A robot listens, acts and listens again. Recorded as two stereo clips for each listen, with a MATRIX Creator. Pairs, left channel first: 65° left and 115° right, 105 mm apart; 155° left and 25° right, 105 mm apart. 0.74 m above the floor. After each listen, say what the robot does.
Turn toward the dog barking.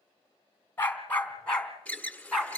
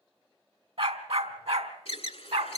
Turn 20° right.
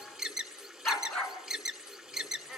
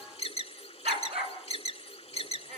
Turn 20° right.
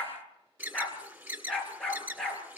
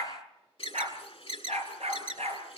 Turn 15° right.
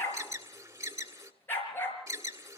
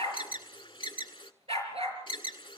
Facing the dog barking, over 4 m away.